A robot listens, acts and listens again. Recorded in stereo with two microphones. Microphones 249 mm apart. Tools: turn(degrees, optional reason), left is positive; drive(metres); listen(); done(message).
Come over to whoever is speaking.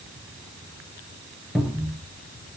listen()
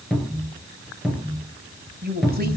turn(degrees=-40, reason="The woman speaking: about 40° right or 140° right.")
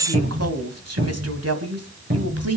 turn(degrees=-100, reason="So it is at 100° right.")
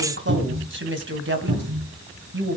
turn(degrees=-50, reason="The woman speaking is now 50° right.")
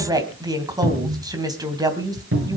turn(degrees=-15, reason="The woman speaking is now 15° right.")
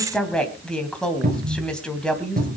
drive(metres=1.0)
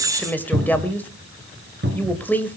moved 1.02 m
drive(metres=1.0)
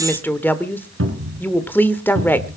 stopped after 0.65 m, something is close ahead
turn(degrees=10, reason="The woman speaking is now 10° left.")
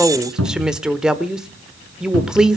done("Arrived at the woman speaking, straight ahead.")